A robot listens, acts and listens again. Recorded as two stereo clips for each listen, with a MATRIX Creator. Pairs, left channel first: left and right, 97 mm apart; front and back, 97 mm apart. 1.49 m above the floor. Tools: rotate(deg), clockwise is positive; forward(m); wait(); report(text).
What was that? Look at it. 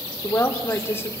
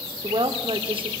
rotate(-155)
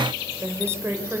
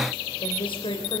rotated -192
rotate(25)
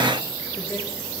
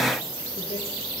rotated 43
rotate(-15)
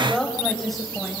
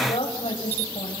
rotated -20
report("Facing the woman speaking.")